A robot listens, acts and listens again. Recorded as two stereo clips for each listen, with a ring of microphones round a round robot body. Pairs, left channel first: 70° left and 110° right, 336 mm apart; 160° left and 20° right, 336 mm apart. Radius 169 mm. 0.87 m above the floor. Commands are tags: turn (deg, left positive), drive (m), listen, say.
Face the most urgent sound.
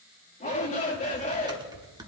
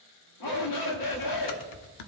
<turn deg="135"/>
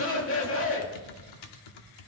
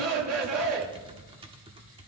<turn deg="20"/>
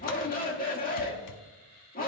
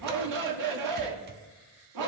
<say>Found it: a shout, straight ahead.</say>